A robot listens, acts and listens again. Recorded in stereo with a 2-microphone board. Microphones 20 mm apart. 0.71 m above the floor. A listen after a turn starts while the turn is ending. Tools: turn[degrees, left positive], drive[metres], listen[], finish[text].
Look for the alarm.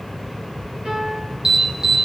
Thought: The alarm: about 35° right or 145° right.
Action: turn[-35]
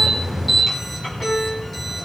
Action: finish[Facing the alarm.]